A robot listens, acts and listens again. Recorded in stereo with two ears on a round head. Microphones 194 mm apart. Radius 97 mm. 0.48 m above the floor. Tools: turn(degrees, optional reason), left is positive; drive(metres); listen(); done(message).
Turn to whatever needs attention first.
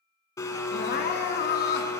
turn(degrees=45, reason="The crying: about 45° left or 135° left.")
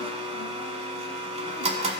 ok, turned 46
listen()
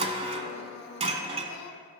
turn(degrees=85, reason="So it is at 85° left.")
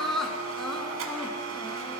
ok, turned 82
done("Found it: crying, straight ahead.")